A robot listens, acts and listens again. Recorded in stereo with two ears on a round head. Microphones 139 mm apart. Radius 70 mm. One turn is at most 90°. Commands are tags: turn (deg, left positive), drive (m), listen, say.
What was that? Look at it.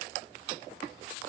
<listen/>
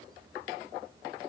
<listen/>
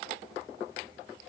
<say>I can't make out anything to turn to.</say>